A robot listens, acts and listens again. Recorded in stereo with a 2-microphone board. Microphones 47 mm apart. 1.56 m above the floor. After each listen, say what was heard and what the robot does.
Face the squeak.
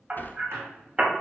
The squeak: about 65° right or 115° right. Turn 65° right.
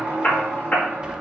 So it is at 20° right. Turn 20° right.
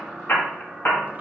Found it: a squeak, straight ahead.